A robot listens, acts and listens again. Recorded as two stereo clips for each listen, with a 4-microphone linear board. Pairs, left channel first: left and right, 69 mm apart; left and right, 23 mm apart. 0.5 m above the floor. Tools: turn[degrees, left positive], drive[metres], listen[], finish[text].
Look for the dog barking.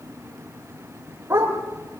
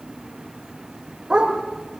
Thought: The dog barking: about 35° right or 145° right.
Action: turn[-35]
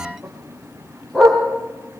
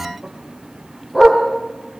Thought: So it is at 10° left.
Action: turn[10]
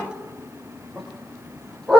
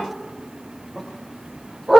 Thought: The dog barking is now 10° left.
Action: turn[10]
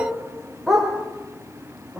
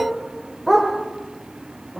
Action: finish[Facing the dog barking, over 4 m away.]